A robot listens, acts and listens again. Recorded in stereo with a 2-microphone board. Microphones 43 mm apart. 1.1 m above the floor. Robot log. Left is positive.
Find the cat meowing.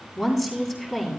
cmd idle
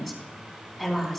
cmd idle
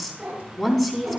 note: The cat meowing: about 25° right or 155° right.
cmd yaw -25
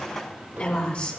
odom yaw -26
note: So it is at 125° right.
cmd yaw -125
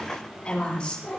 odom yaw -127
note: The cat meowing is now 10° left.
cmd yaw +10
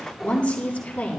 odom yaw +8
cmd idle
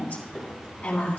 end: Facing the cat meowing, over 4 m away.